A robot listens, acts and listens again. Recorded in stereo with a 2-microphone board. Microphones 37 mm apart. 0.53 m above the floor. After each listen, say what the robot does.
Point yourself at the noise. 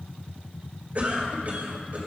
Turn 45° right.
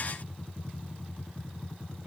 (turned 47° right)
Turn 80° right.
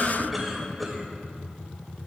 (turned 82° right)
Facing the cough.